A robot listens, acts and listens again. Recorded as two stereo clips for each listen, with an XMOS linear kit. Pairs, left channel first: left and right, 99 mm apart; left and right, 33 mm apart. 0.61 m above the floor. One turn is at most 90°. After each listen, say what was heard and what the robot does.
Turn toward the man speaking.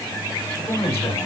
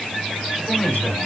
Turn 90° left.
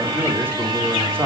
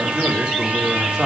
So it is at 25° right. Turn 25° right.
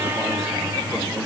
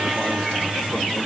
Keep listening.
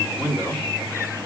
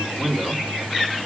The man speaking is now 10° right. Turn 10° right.
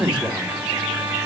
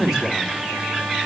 The man speaking is now 10° right. Turn 10° right.
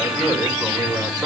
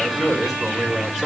Found it: a man speaking, straight ahead, over 4 m away.